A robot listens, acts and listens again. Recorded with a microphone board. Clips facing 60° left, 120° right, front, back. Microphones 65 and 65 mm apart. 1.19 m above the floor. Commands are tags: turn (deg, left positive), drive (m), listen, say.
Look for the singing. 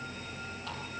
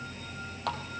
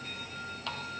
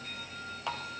<listen/>
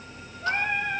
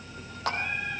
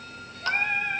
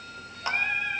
<turn deg="50"/>
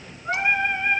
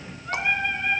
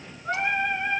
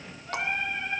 <say>Found it: singing, straight ahead.</say>